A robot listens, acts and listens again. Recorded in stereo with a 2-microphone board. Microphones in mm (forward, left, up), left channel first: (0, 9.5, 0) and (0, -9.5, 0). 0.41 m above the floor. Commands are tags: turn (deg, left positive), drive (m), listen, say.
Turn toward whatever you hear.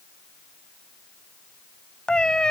<turn deg="45"/>
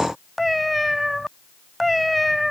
<say>Found it: a cat meowing, straight ahead.</say>